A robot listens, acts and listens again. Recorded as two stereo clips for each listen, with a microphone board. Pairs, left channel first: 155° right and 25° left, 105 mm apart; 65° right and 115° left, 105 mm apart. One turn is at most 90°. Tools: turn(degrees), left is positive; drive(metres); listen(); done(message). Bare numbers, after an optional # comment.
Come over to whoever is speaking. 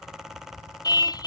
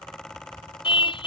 listen()
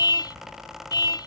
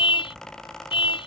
listen()
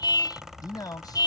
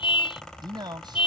# The man speaking: 155° left.
turn(90)
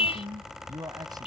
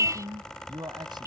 # The man speaking is now 70° left.
turn(70)
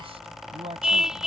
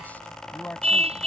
drive(1.0)
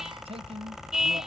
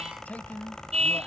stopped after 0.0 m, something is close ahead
done("Something is in my way. I am facing the man speaking but have not reached it.")